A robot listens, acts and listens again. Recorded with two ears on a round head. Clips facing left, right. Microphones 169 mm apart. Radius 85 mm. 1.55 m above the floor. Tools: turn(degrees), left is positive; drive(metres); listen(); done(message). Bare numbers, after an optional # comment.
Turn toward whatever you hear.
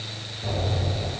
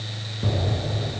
# The explosion: about 65° right or 115° right.
turn(-65)
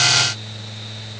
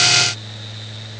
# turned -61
listen()
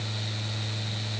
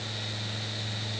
done("I heard an explosion, but can't make it out now. It was about 5° right or 55° right.")